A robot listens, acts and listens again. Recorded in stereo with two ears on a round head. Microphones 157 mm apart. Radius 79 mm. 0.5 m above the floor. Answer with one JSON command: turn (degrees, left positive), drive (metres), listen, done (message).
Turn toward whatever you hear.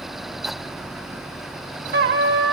{"turn": -65}
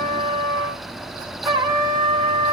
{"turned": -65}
{"turn": -30}
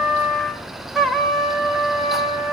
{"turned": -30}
{"done": "Found it: a trumpet, straight ahead."}